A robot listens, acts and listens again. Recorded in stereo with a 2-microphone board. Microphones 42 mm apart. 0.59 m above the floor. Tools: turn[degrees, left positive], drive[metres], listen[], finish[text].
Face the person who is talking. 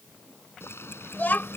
Thought: The child speaking: about 45° left or 135° left.
Action: turn[45]
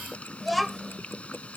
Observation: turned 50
Action: finish[Found it: a child speaking, straight ahead.]